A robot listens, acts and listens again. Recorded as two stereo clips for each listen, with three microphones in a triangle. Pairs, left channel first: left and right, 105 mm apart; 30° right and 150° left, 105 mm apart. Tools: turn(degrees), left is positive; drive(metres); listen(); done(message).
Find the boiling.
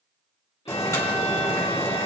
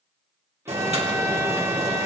turn(degrees=150)
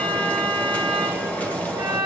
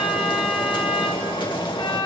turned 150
turn(degrees=15)
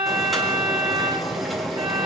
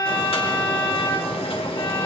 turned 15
done("Found it: boiling, straight ahead, 1 to 2 m away.")